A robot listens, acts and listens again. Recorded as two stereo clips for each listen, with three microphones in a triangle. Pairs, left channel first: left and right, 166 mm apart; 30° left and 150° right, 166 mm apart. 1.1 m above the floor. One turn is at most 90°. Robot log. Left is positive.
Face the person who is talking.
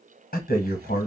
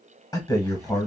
note: The man speaking: 95° left.
cmd yaw +90
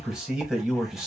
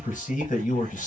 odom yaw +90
end: Facing the man speaking.